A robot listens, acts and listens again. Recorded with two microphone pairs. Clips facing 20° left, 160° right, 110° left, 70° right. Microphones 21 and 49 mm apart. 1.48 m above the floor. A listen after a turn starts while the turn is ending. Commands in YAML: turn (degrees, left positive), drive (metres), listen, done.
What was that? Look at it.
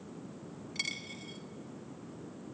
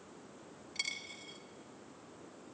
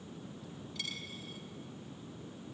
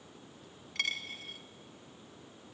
turn: -55
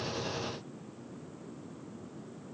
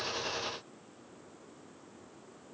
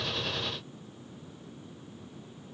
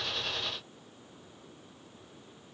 done: "I heard a dropped coin from this way, but can't make it out now."